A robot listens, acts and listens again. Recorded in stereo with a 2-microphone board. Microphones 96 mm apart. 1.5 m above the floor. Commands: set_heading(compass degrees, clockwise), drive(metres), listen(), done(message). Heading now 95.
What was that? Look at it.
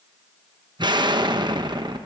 set_heading(140)
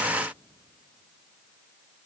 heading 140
listen()
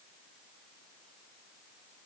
done("I heard an explosion, but can't make it out now. It was about straight ahead or 90° right.")